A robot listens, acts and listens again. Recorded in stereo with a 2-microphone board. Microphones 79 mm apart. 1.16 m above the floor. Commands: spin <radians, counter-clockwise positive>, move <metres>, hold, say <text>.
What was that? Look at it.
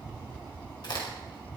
spin 1.05
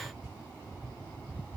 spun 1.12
hold
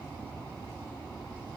say I heard a crack, but can't make it out now. It was about 5° right or 60° left.